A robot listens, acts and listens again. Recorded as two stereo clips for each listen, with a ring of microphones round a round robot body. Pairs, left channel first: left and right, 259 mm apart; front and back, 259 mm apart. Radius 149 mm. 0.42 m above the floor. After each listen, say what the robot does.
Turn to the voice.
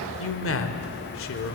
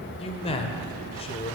Turn 65° left.
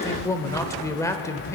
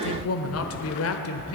Turn 15° left.
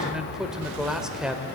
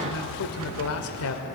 Found it: a man speaking, straight ahead, 1 to 2 m away.